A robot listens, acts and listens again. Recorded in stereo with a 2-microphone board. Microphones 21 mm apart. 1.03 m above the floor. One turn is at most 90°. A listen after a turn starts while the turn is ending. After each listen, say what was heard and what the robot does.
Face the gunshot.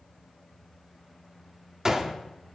The gunshot: about 25° right or 155° right. Turn 25° right.
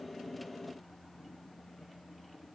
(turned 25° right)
Keep listening.
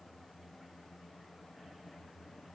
I heard a gunshot, but can't make it out now. It was about straight ahead or 130° right.